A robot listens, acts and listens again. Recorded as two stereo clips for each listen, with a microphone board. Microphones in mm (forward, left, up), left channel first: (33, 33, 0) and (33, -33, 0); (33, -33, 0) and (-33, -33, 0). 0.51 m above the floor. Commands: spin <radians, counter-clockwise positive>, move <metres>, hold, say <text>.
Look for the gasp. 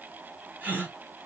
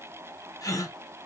spin -0.44
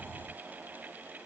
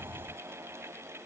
say Facing where the gasp came from. I can't hear it now.